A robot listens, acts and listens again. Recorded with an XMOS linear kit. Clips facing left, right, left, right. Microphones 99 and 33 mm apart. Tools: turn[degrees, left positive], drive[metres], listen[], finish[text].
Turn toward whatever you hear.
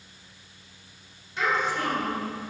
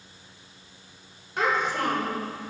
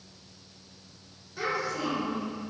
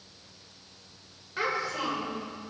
Thought: The child speaking: about 60° right or 120° right.
Action: turn[-60]
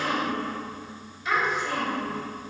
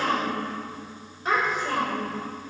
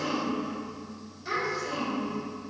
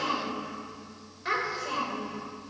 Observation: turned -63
Thought: So it is at 40° right.
Action: turn[-40]
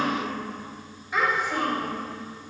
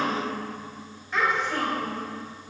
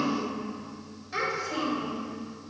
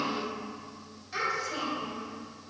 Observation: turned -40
Thought: The child speaking is now 10° left.
Action: turn[10]
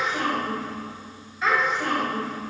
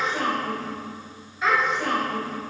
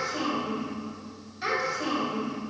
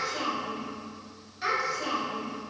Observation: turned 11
Action: finish[Found it: a child speaking, straight ahead.]